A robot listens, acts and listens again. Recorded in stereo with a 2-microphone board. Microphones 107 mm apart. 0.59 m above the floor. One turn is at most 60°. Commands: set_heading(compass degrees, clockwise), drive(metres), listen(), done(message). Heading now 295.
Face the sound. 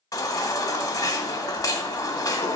set_heading(260)
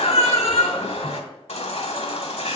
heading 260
set_heading(200)
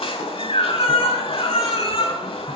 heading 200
set_heading(140)
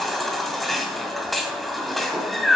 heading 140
done("Facing the baby crying, 1 to 2 m away.")